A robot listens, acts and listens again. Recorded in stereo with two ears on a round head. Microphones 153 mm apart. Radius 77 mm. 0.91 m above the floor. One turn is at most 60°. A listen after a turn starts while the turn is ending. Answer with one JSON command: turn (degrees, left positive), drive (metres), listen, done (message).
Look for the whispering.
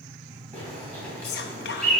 {"turn": 60}
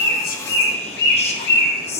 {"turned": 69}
{"turn": 35}
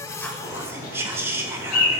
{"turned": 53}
{"turn": -15}
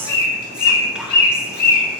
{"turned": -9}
{"listen": true}
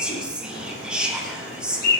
{"done": "Facing the whispering."}